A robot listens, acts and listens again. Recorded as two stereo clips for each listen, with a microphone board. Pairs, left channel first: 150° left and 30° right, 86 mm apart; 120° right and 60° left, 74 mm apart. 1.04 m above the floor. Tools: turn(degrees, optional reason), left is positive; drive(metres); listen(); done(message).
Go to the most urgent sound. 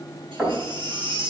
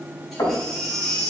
turn(degrees=-35, reason="The baby crying: 35° right.")
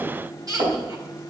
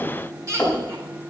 turn(degrees=10, reason="The baby crying is now 10° left.")
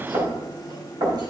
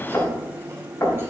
listen()
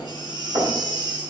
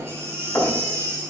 drive(metres=1.0)
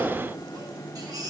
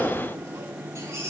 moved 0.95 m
turn(degrees=10, reason="The baby crying is now 10° left.")
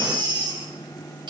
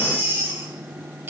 drive(metres=1.0)
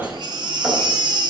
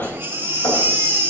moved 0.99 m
drive(metres=1.0)
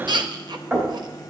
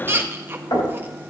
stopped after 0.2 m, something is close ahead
done("I am next to the baby crying.")